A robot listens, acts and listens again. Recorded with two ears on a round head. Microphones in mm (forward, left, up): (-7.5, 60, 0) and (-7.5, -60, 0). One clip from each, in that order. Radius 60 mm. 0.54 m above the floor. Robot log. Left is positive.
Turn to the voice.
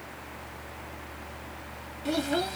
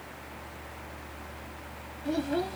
note: The child speaking: about 45° left or 135° left.
cmd yaw +45
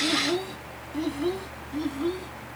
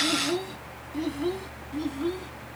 end: Found it: a child speaking, straight ahead.